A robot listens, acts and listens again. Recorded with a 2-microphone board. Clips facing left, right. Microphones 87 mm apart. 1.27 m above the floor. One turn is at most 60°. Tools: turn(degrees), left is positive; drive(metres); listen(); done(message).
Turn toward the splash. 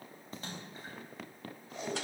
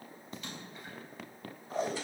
turn(degrees=35)
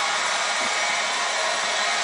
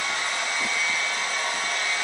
listen()
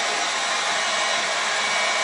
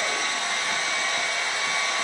done("I heard a splash, but can't make it out now. It was about straight ahead or 110° left.")